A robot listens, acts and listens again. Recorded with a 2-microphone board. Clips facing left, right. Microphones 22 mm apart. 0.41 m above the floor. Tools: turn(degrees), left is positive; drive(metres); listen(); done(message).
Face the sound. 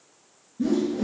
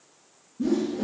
turn(degrees=35)
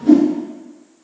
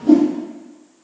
turn(degrees=110)
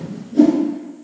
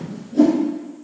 done("Found it: a whoosh, straight ahead.")